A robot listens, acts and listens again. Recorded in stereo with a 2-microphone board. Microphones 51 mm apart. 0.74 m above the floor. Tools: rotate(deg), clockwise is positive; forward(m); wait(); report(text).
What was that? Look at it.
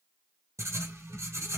rotate(90)
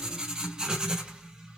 rotate(20)
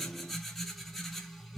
report("Found it: writing, straight ahead.")